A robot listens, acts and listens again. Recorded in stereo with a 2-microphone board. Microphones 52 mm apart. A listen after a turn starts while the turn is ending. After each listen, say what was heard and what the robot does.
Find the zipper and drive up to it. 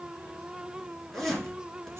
Turn 30° left.
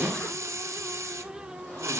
Keep listening.
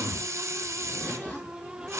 So it is at 140° left. Turn 140° left.
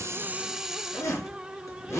The zipper is now 65° left. Turn 65° left.
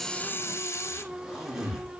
The zipper is now 10° right. Turn 10° right.
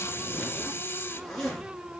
Drive 1.0 m forward.
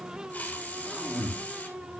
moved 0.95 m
Drive 1.0 m forward.
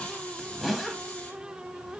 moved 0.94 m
Drive 1.0 m forward.
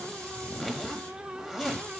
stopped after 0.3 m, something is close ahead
Arrived at the zipper, straight ahead.